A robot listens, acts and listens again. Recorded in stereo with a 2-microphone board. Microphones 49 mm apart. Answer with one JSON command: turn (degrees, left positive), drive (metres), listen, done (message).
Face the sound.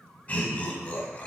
{"turn": 25}
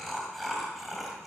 {"done": "Facing the laughter."}